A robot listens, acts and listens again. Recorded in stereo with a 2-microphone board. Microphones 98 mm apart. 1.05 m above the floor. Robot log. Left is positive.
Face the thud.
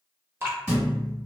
cmd yaw -30
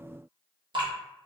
cmd idle
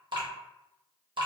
end: I heard a thud, but can't make it out now. It was about 20° left or 140° right.